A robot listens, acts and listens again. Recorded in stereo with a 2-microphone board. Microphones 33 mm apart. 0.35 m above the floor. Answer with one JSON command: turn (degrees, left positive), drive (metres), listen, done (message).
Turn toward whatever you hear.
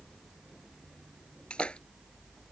{"turn": 30}
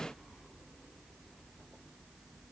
{"listen": true}
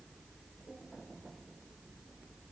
{"done": "I heard a splash, but can't make it out now. It was about straight ahead or 120° left."}